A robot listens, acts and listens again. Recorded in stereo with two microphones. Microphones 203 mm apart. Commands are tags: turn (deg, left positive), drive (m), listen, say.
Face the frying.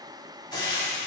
<turn deg="20"/>
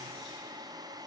<listen/>
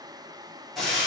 <say>Facing the frying, 2 to 4 m away.</say>